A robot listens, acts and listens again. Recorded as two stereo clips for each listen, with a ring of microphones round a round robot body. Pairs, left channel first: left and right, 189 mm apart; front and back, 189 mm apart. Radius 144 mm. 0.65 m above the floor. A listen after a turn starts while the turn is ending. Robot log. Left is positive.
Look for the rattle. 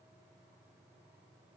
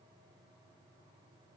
cmd idle
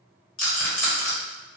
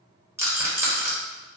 note: The rattle: 105° left.
cmd yaw +105
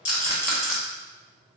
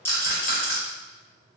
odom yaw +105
end: Found it: a rattle, straight ahead, 1 to 2 m away.